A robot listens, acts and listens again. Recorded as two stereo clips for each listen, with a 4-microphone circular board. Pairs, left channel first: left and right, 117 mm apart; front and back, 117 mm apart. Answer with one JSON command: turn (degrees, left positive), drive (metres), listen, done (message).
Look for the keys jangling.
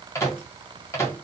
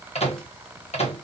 {"listen": true}
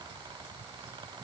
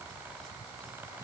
{"listen": true}
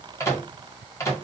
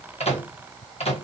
{"done": "I can't make out keys jangling, only a microwave."}